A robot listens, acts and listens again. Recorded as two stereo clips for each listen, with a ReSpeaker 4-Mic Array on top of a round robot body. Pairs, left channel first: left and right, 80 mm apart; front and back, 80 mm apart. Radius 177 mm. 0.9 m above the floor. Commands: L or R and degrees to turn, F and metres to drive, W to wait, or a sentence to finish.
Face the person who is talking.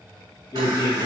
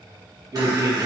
L140
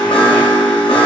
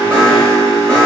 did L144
W
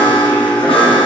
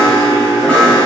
W
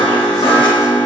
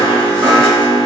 I heard a man speaking from this way, but can't make it out now.